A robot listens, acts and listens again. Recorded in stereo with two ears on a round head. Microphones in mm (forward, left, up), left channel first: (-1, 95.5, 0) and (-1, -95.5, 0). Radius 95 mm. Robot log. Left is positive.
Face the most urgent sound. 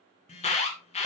note: The alarm: about 30° left or 150° left.
cmd yaw +30
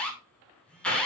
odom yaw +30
end: Facing the alarm, 2 to 4 m away.